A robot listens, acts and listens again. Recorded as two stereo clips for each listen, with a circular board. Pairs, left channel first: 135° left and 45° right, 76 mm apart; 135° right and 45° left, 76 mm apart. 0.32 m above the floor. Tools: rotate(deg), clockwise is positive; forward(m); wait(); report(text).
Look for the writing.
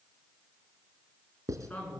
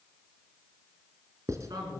report("Facing the writing.")